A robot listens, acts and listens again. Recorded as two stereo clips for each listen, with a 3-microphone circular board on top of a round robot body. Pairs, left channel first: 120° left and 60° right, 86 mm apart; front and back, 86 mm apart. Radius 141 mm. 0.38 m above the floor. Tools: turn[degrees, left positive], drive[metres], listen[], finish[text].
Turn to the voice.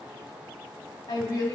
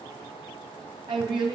Thought: The woman speaking: 160° left.
Action: turn[160]
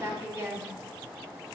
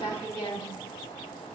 Action: finish[Found it: a woman speaking, straight ahead, 2 to 4 m away.]